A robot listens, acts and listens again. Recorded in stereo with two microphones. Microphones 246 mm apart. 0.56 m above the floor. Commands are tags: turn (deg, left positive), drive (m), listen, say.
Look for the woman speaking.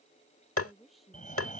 <turn deg="30"/>
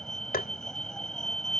<listen/>
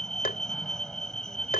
<listen/>
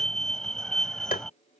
<say>I heard a woman speaking, but can't make it out now. It was about 30° right or 150° left.</say>